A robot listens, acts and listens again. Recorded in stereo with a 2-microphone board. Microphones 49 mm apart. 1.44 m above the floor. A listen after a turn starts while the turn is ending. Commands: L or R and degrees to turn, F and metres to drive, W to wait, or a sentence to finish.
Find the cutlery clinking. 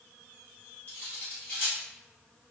L35
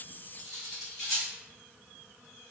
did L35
Found it: cutlery clinking, straight ahead.